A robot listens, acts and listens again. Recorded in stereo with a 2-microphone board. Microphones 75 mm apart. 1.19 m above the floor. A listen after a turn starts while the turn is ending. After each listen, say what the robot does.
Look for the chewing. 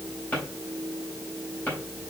Keep listening.
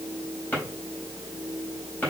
Keep listening.
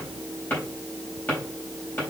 I can't make out chewing to turn to.